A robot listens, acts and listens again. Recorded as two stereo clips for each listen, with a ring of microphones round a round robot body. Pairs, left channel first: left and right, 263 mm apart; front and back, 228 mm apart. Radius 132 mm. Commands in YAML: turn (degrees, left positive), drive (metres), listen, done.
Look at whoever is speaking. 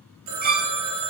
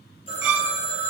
listen: true
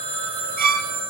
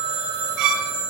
listen: true
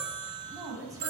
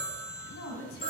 turn: -15
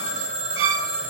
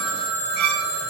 listen: true
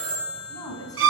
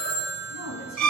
turn: 15
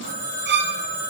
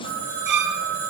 listen: true
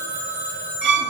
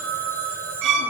listen: true
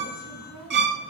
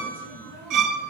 done: "I heard a woman speaking from this way, but can't make it out now."